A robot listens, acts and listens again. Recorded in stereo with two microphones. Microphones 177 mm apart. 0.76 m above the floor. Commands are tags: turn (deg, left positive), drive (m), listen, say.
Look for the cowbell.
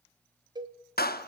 <turn deg="-25"/>
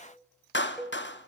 <say>Facing the cowbell, under 1 m away.</say>